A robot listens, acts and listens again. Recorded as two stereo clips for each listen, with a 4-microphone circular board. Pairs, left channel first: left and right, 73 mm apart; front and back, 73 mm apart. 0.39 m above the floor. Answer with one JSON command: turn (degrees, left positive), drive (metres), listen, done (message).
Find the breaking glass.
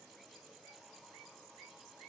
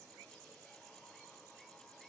{"listen": true}
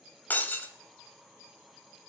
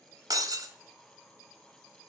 {"turn": 155}
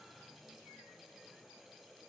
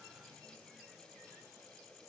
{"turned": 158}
{"done": "I heard breaking glass from this way, but can't make it out now."}